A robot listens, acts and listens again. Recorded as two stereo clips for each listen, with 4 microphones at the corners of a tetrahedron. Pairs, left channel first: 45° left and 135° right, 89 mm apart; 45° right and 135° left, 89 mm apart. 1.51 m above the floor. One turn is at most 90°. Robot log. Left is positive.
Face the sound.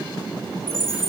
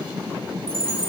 note: The chime: 130° left.
cmd yaw +90
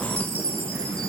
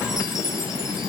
note: The chime is now 50° left.
cmd yaw +50
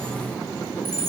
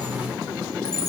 end: Facing the chime, 2 to 4 m away.